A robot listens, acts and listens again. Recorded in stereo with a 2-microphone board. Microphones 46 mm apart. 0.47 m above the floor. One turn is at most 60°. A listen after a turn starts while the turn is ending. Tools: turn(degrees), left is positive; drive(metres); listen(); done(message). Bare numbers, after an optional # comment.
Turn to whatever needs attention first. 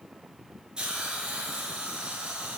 listen()
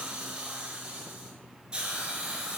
listen()
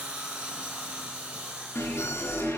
turn(60)
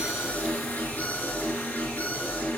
# So it is at 35° left.
turn(35)
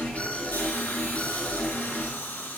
# The alarm is now 30° left.
turn(30)
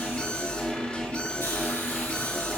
# The alarm is now 20° left.
turn(20)
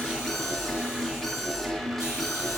done("Found it: an alarm, straight ahead, over 4 m away.")